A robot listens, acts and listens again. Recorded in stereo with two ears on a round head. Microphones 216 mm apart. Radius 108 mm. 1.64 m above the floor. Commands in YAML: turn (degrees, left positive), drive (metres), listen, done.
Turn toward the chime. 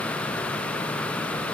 listen: true
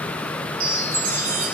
turn: -55
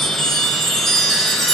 done: "Facing the chime, 2 to 4 m away."